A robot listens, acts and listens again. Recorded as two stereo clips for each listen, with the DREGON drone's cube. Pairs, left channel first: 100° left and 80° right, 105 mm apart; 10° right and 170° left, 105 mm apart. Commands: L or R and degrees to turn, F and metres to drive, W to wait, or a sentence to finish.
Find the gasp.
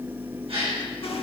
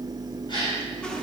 R55
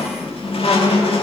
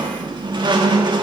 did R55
Facing where the gasp came from. I can't hear it now.